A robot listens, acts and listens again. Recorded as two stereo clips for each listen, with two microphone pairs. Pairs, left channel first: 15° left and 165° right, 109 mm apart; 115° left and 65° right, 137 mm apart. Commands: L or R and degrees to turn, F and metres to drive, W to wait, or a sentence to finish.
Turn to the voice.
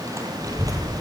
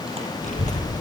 L140
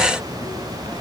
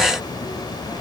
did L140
L55
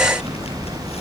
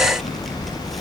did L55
L25
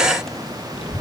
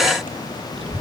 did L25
R15
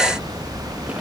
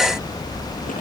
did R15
Facing the child speaking, over 4 m away.